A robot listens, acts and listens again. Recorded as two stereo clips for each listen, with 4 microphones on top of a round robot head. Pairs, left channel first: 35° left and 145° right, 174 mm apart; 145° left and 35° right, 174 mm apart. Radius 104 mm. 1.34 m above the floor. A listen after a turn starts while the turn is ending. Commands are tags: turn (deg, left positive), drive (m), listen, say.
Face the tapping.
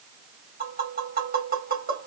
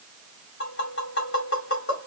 <turn deg="175"/>
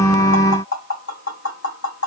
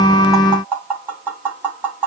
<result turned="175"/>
<turn deg="45"/>
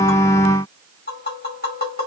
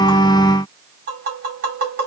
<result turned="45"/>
<say>Found it: tapping, straight ahead.</say>